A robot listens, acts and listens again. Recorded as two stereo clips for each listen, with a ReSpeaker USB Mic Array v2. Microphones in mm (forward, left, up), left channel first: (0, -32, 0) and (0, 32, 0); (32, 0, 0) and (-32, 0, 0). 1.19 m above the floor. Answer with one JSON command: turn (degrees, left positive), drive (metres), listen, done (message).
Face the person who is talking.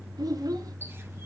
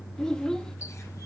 {"turn": 80}
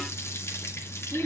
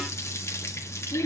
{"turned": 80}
{"done": "Facing the child speaking."}